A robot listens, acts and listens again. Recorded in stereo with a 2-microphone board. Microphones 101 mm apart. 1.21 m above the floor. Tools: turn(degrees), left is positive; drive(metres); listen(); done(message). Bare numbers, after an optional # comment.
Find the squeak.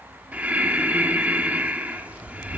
listen()
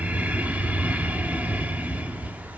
listen()
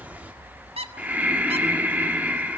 turn(-90)
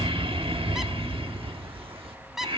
done("Facing the squeak, 1 to 2 m away.")